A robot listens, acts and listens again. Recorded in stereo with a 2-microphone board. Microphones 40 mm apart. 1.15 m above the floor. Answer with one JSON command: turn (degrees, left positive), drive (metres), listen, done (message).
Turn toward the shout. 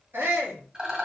{"turn": -75}
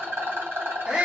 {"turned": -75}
{"turn": -25}
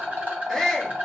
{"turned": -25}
{"turn": 10}
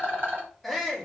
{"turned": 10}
{"done": "Facing the shout."}